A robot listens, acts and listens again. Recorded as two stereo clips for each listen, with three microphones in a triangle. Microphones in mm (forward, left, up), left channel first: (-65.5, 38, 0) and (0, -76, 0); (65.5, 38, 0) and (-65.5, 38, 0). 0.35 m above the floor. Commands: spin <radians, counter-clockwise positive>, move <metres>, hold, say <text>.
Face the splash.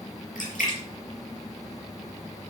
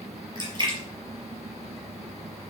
spin 2.18
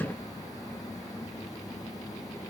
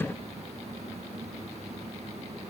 say Facing where the splash came from. I can't hear it now.